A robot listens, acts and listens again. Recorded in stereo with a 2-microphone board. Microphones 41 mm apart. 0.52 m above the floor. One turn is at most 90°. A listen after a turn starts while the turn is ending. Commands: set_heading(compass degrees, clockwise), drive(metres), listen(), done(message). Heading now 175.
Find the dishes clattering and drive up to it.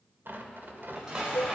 set_heading(190)
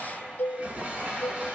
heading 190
set_heading(280)
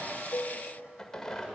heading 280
set_heading(335)
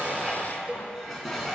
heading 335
drive(1.0)
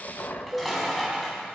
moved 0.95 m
drive(1.0)
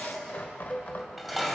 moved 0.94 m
drive(1.0)
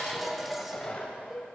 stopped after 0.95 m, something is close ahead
done("Arrived at the dishes clattering, straight ahead.")